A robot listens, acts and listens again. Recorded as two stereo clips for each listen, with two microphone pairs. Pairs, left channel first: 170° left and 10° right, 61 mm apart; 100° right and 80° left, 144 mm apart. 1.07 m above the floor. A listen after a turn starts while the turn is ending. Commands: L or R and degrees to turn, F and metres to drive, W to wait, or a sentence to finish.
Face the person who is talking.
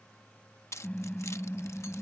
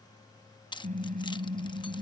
W
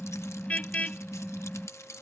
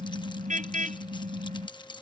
W
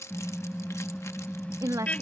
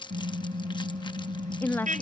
R25
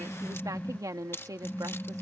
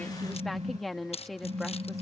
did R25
R15
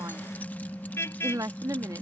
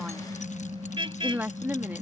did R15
Found it: a woman speaking, straight ahead.